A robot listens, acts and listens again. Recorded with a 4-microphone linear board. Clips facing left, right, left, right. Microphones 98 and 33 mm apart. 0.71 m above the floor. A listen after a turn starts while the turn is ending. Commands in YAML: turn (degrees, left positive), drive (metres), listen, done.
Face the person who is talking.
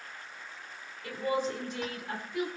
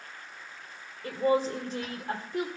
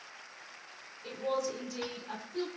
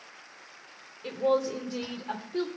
turn: -35
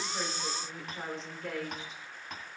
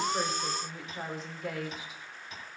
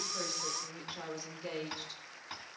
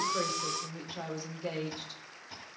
done: "Facing the woman speaking."